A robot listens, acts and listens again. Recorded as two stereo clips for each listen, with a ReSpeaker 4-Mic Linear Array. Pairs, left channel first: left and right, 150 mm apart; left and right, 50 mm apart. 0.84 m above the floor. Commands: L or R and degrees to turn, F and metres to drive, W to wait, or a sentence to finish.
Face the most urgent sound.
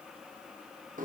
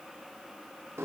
W
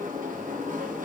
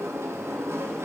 W
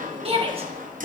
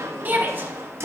R40
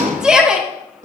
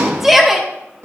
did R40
Facing the shout.